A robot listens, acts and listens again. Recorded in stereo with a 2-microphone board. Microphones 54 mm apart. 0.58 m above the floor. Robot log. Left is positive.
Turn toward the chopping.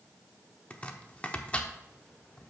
note: The chopping: about 25° left or 155° left.
cmd yaw +25
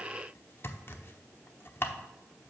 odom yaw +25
note: So it is at 125° left.
cmd yaw +125
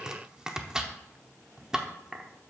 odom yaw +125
note: The chopping is now 15° right.
cmd yaw -15
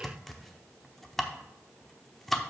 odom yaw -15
end: Facing the chopping, under 1 m away.